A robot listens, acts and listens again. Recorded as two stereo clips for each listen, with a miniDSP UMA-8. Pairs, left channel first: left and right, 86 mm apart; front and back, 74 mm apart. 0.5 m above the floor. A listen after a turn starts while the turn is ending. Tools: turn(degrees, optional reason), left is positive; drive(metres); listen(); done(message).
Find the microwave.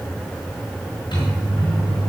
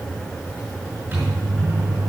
turn(degrees=115, reason="The microwave: 115° left.")
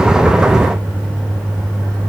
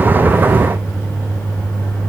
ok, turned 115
turn(degrees=-20, reason="The microwave is now 20° right.")
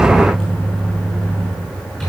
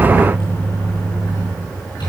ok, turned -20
done("Facing the microwave, over 4 m away.")